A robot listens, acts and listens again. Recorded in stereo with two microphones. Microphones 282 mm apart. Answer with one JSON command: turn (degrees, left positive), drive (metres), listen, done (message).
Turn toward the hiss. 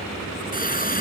{"turn": 30}
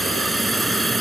{"done": "Facing the hiss."}